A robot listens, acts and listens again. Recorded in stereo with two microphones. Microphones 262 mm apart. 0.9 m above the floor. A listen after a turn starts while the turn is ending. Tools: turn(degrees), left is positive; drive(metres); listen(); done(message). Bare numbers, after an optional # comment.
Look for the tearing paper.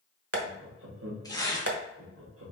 turn(30)
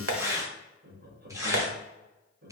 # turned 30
# So it is at 15° right.
turn(-15)
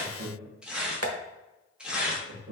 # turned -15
done("Facing the tearing paper, 1 to 2 m away.")